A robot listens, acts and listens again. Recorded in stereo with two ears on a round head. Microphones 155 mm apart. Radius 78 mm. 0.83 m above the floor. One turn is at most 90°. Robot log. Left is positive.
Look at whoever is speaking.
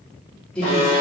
cmd yaw +30
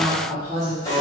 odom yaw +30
note: So it is at 25° right.
cmd yaw -25
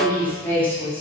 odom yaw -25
note: The woman speaking is now 10° left.
cmd yaw +10
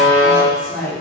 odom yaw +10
end: Facing the woman speaking, 1 to 2 m away.